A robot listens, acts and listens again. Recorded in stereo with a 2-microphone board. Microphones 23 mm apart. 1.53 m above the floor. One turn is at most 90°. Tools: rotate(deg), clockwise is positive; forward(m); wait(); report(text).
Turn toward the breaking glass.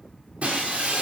rotate(90)
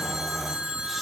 report("I heard breaking glass from this way, but can't make it out now.")